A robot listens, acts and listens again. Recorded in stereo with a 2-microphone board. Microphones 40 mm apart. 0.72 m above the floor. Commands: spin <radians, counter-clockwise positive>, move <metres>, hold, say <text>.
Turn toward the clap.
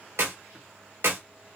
spin -1.13
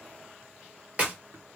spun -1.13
spin -0.52
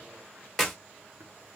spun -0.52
say Facing the clap, 1 to 2 m away.